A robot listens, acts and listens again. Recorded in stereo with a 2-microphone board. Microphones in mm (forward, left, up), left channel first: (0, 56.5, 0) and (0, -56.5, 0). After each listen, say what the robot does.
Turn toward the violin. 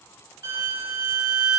Turn 30° right.
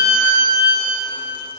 Facing the violin.